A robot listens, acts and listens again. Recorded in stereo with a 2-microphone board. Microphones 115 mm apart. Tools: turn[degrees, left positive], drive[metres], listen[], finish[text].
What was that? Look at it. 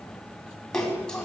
Action: turn[30]
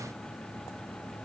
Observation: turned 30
Action: listen[]
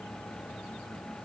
Action: finish[I heard a splash, but can't make it out now. It was about 25° right or 145° left.]